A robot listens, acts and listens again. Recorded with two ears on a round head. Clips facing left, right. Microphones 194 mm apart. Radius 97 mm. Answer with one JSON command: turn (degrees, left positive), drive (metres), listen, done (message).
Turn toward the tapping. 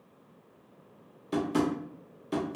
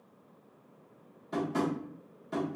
{"turn": 45}
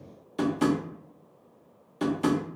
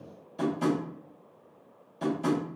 {"turn": 90}
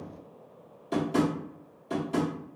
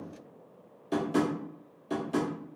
{"done": "Facing the tapping, under 1 m away."}